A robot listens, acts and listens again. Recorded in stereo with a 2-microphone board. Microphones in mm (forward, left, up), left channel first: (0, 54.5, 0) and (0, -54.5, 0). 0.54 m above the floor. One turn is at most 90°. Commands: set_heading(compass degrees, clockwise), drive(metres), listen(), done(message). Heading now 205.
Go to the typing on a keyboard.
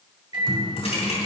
set_heading(130)
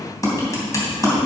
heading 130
set_heading(100)
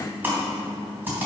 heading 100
set_heading(120)
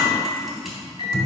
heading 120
drive(1.0)
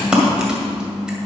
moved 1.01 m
set_heading(130)
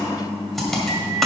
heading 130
drive(1.0)
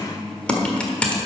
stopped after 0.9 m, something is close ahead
set_heading(120)
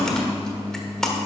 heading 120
done("I am next to the typing on a keyboard.")